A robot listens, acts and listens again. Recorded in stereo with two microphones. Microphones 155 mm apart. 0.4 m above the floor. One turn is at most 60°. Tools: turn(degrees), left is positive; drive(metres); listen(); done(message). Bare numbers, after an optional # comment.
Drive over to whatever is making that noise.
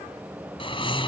# The snoring: about 35° left or 145° left.
turn(35)
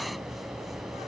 drive(1.0)
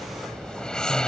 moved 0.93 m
drive(1.0)
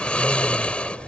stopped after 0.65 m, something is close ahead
# The snoring is now 10° left.
turn(10)
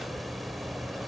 done("Arrived at the snoring, straight ahead.")